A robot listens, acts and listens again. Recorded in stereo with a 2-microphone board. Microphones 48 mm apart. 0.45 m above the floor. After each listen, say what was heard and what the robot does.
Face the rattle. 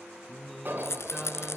The rattle: about 70° left or 110° left. Turn 70° left.
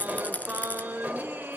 So it is at 35° left. Turn 35° left.
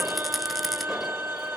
Keep listening.
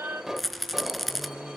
Found it: a rattle, straight ahead, 1 to 2 m away.